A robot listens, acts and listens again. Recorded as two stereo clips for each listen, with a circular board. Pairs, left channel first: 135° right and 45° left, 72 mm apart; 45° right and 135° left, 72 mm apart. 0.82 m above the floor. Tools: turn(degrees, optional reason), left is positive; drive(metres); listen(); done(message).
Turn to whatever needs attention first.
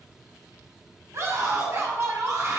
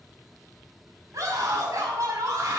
turn(degrees=90, reason="The scream: 90° left.")
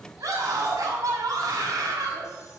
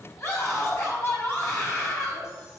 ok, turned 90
turn(degrees=10, reason="The scream is now 10° left.")
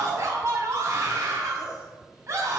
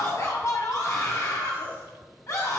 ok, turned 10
done("Facing the scream, over 4 m away.")